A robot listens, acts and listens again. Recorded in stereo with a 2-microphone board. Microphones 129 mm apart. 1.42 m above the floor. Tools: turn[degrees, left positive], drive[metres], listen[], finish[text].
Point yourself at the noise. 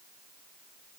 Action: listen[]
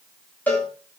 Action: turn[30]
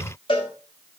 Thought: So it is at 140° left.
Action: turn[140]
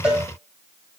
Action: finish[Facing the cowbell, 2 to 4 m away.]